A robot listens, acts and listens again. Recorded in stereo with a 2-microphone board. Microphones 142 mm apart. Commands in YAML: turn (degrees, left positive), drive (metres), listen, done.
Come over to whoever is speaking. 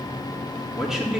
turn: -30
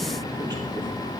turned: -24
listen: true
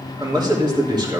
turn: -150
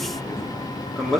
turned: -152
drive: 1.0
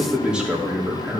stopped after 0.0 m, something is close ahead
done: "Something is in my way. I am facing the man speaking but have not reached it."